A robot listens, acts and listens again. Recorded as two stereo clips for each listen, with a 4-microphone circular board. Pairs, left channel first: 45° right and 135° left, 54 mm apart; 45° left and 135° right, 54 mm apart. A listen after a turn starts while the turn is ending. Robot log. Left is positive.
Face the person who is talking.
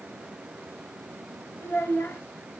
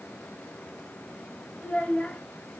note: The child speaking: 20° right.
cmd yaw -20
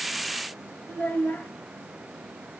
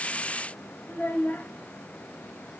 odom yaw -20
end: Facing the child speaking.